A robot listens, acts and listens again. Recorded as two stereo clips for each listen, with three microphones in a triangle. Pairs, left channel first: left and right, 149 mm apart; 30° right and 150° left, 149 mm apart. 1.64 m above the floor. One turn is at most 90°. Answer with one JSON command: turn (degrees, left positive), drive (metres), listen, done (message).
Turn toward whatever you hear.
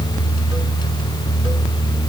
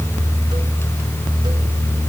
{"listen": true}
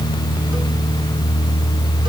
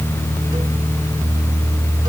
{"listen": true}
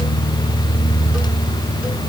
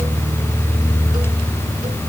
{"done": "I can't make out anything."}